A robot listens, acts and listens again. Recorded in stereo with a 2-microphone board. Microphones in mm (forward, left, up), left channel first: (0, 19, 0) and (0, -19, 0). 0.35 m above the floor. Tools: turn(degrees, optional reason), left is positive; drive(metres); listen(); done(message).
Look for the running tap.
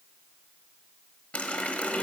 turn(degrees=35, reason="The running tap: about 35° left or 145° left.")
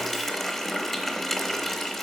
turn(degrees=10, reason="So it is at 10° left.")
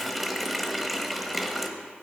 done("Facing the running tap, 1 to 2 m away.")